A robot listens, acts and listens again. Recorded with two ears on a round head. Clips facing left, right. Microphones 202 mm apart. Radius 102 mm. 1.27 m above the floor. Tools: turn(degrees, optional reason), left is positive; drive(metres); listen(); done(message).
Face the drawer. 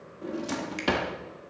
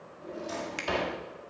turn(degrees=65, reason="The drawer: about 65° left or 115° left.")
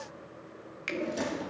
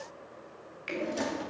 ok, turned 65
done("Found it: a drawer, straight ahead, 1 to 2 m away.")